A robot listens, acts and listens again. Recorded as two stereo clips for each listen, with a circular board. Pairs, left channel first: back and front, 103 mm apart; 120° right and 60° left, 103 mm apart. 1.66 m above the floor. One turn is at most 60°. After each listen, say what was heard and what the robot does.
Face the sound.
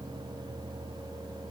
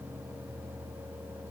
Keep listening.
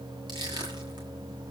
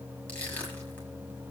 The crushing: 45° right. Turn 45° right.
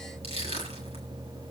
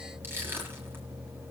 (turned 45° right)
Found it: crushing, straight ahead.